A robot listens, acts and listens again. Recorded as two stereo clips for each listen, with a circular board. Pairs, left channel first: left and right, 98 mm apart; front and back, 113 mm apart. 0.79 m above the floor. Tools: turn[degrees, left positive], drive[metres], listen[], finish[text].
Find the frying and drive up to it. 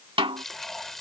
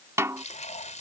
Action: drive[1.0]
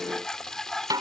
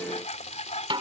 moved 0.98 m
Action: drive[1.0]
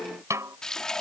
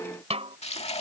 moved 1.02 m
Action: drive[1.0]
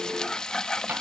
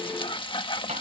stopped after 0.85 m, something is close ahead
Thought: The frying is now 10° left.
Action: turn[10]
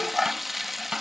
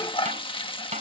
Action: finish[I am next to the frying.]